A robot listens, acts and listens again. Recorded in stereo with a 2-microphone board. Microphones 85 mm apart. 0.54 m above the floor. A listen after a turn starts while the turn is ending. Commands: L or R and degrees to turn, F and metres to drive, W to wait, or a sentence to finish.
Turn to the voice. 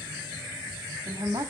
R55
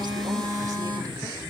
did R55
W
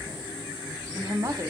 R55
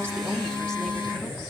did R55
W
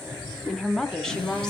Found it: a woman speaking, straight ahead.